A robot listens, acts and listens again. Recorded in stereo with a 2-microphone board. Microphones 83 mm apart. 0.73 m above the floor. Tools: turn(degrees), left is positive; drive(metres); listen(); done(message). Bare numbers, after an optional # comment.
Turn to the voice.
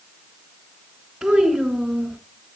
turn(-30)
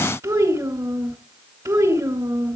# So it is at 140° right.
turn(-140)
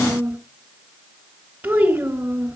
# The child speaking is now 15° right.
turn(-15)
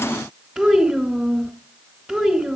done("Found it: a child speaking, straight ahead.")